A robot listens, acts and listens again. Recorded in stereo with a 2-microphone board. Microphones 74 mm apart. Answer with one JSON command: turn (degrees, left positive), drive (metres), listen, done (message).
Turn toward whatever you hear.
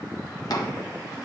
{"turn": 65}
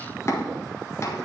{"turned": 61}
{"turn": 45}
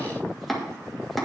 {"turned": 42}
{"done": "Facing the chopping, 1 to 2 m away."}